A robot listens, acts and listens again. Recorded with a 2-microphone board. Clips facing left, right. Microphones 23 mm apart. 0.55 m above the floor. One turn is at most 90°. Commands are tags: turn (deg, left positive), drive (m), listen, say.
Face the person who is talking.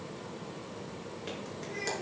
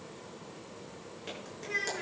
<turn deg="-70"/>
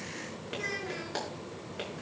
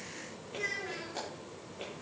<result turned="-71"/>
<say>Facing the child speaking, over 4 m away.</say>